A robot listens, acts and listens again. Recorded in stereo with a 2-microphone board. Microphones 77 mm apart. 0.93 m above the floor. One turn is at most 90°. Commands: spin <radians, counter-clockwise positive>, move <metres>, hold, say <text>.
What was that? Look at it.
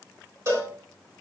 spin -0.79
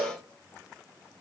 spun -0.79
spin -1.57
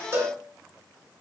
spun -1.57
spin -0.61
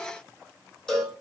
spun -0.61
spin 0.17
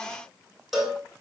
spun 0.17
say Facing the cowbell, 2 to 4 m away.